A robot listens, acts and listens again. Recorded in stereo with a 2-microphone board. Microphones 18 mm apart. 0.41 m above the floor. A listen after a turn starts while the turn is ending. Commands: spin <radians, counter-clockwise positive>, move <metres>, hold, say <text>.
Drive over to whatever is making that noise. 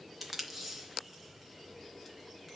spin -0.52
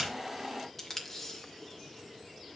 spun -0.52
spin 0.44
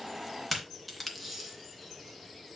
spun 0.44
move 1.0
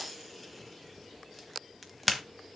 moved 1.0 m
move 1.0
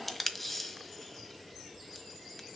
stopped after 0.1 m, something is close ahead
spin 0.26
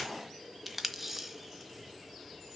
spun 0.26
say Arrived at the tape being pulled, straight ahead.